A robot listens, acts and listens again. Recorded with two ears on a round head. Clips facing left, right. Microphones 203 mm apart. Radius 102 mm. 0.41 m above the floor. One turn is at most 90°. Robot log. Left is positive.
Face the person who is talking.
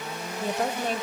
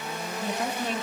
note: The woman speaking: about 40° left or 140° left.
cmd yaw +40
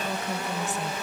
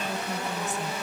cmd idle
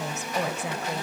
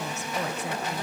note: So it is at 90° left.
cmd yaw +90
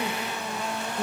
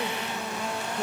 note: The woman speaking is now 10° right.
cmd yaw -10
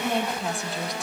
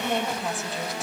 end: Facing the woman speaking.